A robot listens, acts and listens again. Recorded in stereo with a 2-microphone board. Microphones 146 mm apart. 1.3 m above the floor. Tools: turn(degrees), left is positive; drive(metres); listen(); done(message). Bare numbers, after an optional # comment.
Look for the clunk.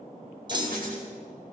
# The clunk: about 30° right or 150° right.
turn(-30)
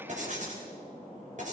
listen()
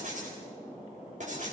done("I heard a clunk, but can't make it out now. It was about straight ahead or 120° right.")